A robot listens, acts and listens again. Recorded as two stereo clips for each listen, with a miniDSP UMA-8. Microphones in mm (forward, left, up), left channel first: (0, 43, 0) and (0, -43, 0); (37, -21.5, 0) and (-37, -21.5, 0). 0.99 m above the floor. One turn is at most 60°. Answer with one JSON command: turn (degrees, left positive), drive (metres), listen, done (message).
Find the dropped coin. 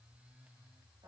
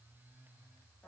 {"listen": true}
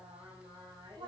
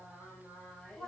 {"listen": true}
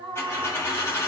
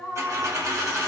{"turn": 60}
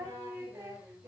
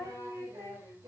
{"turn": 60}
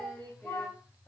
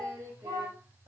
{"turn": 25}
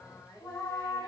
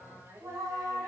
{"done": "Facing where the dropped coin came from. I can't hear it now."}